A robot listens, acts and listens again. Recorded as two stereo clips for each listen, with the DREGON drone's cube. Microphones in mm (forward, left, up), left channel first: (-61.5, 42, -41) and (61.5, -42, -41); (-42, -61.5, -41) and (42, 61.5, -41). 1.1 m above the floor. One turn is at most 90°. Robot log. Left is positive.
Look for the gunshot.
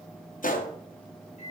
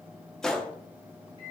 note: The gunshot: 150° left.
cmd yaw +90
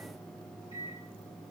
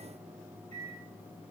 note: Nothing new. It was at 60° left.
cmd yaw +60
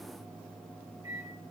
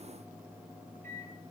end: I heard a gunshot from this way, but can't make it out now.